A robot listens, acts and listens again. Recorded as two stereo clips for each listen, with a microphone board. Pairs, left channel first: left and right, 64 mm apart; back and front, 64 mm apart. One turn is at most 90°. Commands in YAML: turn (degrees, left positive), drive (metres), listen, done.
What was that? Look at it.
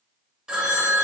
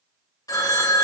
turn: -90
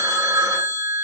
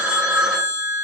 turn: -80
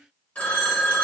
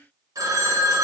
turn: 20
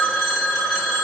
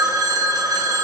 done: "Facing the phone ringing."